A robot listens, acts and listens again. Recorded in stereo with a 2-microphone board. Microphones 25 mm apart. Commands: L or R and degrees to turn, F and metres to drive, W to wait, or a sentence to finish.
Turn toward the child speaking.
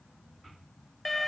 W
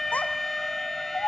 L60
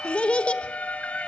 L45
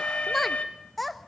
Facing the child speaking.